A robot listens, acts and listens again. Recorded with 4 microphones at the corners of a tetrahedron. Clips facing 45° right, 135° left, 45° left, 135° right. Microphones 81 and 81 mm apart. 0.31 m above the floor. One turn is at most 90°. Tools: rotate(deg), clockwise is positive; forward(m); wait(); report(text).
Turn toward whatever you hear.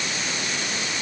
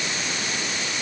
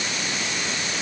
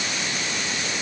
wait()
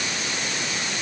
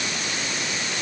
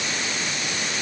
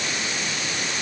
wait()
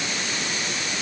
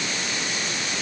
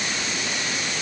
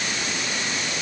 report("I can't make out anything to turn to.")